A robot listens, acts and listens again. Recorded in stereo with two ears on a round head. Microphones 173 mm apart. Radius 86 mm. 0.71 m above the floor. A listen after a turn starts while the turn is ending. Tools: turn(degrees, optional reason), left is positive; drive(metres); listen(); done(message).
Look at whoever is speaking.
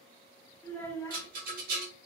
turn(degrees=30)
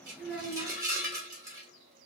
turn(degrees=-20, reason="So it is at 20° right.")
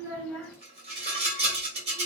done("Found it: a child speaking, straight ahead, under 1 m away.")